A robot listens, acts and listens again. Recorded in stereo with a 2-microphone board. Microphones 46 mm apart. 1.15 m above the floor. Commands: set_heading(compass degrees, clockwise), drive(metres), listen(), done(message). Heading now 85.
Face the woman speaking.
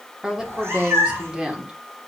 set_heading(105)
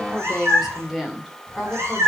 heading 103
set_heading(133)
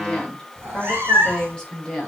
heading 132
set_heading(117)
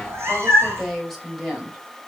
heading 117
done("Found it: a woman speaking, straight ahead, over 4 m away.")